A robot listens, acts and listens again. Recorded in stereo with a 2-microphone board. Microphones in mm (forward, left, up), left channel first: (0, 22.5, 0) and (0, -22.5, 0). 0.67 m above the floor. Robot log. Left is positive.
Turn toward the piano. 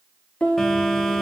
note: The piano: about 25° left or 155° left.
cmd yaw +25
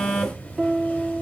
end: Facing the piano.